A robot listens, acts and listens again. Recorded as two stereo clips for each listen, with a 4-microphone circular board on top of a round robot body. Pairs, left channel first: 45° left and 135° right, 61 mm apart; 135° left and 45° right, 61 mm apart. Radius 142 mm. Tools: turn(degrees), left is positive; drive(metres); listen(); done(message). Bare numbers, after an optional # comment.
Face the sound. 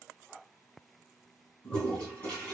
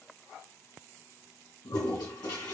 # The toilet flushing: 120° left.
turn(120)
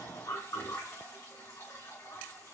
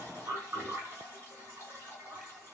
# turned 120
# The toilet flushing is now 10° left.
turn(10)
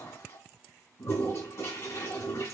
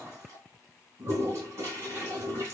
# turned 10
done("Found it: a toilet flushing, straight ahead, 2 to 4 m away.")